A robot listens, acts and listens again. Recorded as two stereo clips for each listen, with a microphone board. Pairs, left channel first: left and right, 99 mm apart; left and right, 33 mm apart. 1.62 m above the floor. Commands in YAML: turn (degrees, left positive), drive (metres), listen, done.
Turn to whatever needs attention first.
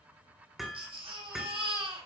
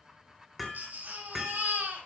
turn: -65
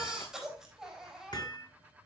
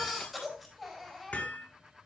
done: "Facing the baby crying, over 4 m away."